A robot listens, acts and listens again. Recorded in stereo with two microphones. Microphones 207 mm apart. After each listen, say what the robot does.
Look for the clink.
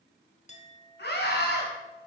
Turn 35° left.
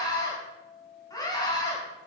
Turn 110° left.
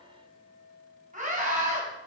Turn 55° left.
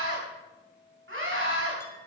Turn 10° left.
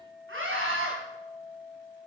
Facing the clink.